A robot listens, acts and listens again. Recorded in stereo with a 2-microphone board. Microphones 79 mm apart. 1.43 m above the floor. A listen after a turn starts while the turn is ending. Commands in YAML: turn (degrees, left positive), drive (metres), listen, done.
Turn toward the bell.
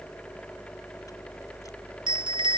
turn: -90
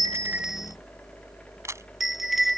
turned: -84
done: "Facing the bell."